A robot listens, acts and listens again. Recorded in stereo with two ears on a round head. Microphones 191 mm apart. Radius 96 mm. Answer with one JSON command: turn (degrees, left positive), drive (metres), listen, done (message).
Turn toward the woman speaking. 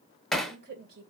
{"turn": -50}
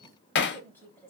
{"turn": 10}
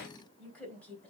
{"turn": 10}
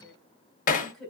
{"done": "Found it: a woman speaking, straight ahead, 2 to 4 m away."}